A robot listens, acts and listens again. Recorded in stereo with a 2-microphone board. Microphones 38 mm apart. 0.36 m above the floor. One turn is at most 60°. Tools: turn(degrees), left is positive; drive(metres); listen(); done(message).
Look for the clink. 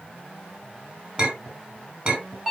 turn(degrees=-35)
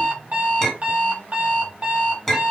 done("Found it: a clink, straight ahead, 1 to 2 m away.")